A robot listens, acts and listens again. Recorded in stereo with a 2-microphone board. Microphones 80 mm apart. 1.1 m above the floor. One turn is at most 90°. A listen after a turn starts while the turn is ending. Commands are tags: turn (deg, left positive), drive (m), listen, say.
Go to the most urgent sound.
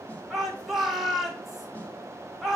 <turn deg="-30"/>
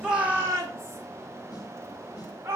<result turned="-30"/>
<turn deg="-90"/>
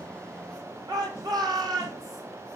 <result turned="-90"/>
<turn deg="-55"/>
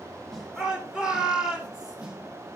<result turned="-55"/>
<turn deg="-10"/>
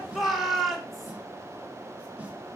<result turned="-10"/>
<drive m="1.0"/>
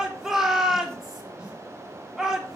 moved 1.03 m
<drive m="1.0"/>
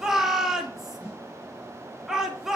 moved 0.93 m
<drive m="1.0"/>
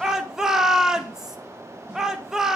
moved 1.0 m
<turn deg="-10"/>
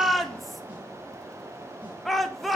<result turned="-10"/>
<drive m="1.0"/>
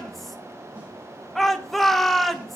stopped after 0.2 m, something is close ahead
<say>Arrived at the shout, straight ahead.</say>